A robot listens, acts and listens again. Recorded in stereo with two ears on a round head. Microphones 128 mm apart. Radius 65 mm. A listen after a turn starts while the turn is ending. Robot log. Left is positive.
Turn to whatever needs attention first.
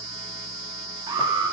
note: The alarm: about 35° right or 145° right.
cmd yaw -35
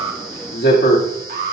note: So it is at 110° right.
cmd yaw -110
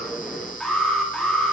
end: Found it: an alarm, straight ahead.